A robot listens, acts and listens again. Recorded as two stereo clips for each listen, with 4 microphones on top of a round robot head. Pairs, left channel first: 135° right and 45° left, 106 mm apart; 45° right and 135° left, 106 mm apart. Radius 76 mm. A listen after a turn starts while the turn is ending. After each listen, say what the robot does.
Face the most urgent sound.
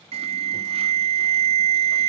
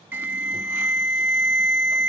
Turn 70° left.
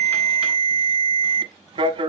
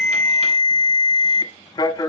Turn 10° left.
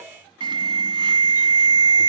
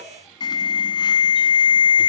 Found it: an alarm, straight ahead, 1 to 2 m away.